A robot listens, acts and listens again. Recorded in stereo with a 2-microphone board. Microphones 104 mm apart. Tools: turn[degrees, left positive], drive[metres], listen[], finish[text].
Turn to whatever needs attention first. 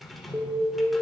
Thought: The alarm: about 45° right or 135° right.
Action: turn[-45]
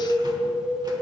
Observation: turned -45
Thought: So it is at 80° right.
Action: turn[-80]
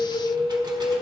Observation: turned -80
Action: finish[Found it: an alarm, straight ahead, 1 to 2 m away.]